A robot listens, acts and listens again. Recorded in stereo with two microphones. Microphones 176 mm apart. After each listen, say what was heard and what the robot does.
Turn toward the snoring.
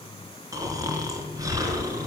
The snoring: about 20° right or 160° right. Turn 20° right.
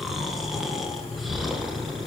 Facing the snoring, 2 to 4 m away.